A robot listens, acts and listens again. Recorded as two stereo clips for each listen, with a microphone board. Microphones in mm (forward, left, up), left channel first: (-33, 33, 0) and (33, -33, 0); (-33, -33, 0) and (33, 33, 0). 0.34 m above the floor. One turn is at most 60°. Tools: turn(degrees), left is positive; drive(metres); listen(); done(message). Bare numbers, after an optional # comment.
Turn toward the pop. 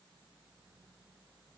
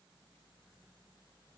listen()
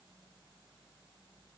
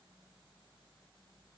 listen()
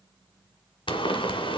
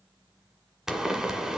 # The pop: 130° left.
turn(60)
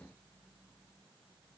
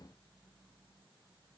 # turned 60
# Nothing new. It was at 70° left.
turn(60)
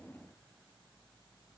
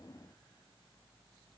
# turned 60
# Nothing new. It was at 10° left.
turn(10)
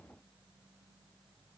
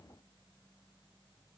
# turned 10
done("Facing where the pop came from. I can't hear it now.")